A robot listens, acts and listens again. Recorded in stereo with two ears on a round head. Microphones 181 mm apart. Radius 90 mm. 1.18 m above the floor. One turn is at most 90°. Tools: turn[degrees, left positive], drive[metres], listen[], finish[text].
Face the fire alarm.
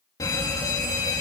Thought: The fire alarm: about 20° left or 160° left.
Action: turn[20]
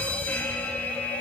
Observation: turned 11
Thought: So it is at 10° left.
Action: turn[10]
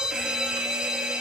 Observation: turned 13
Action: finish[Facing the fire alarm.]